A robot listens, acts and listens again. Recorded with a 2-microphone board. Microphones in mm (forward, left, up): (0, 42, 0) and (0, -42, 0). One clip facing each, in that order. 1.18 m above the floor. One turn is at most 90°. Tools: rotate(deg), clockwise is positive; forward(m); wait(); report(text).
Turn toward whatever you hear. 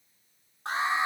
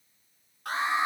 rotate(-25)
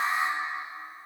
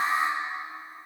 report("Facing the alarm, over 4 m away.")